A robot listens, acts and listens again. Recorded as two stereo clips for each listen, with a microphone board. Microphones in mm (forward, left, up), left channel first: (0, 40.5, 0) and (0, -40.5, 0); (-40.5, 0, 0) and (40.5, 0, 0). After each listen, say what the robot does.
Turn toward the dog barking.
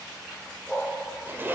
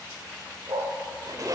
Facing the dog barking.